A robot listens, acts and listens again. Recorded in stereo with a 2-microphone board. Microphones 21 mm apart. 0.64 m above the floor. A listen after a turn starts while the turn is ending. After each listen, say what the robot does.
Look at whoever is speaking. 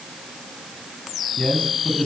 Turn 90° left.
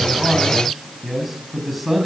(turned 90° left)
Facing the man speaking.